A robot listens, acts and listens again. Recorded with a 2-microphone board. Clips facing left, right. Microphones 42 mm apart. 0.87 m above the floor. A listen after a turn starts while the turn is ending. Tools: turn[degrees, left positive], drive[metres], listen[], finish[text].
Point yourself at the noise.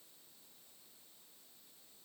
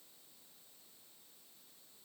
Action: listen[]
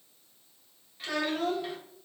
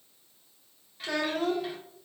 Action: turn[30]
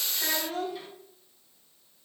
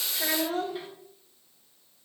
Thought: So it is at 25° right.
Action: turn[-25]
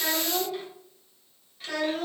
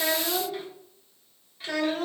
Action: finish[Found it: a child speaking, straight ahead.]